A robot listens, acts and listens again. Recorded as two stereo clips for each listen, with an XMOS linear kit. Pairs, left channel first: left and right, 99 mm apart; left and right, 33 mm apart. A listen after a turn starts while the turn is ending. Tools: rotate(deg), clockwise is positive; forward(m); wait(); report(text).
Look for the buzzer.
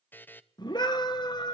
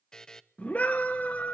rotate(-20)
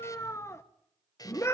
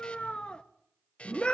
rotate(-140)
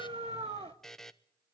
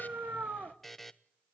report("Facing the buzzer.")